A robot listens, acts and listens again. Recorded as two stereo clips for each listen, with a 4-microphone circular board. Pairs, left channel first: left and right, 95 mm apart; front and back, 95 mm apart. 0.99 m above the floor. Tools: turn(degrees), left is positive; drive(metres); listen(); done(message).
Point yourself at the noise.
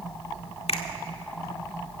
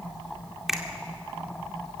turn(degrees=95)
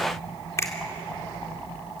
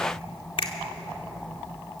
turn(degrees=30)
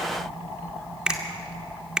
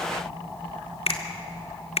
turn(degrees=-10)
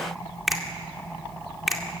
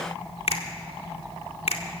done("Facing the finger snap.")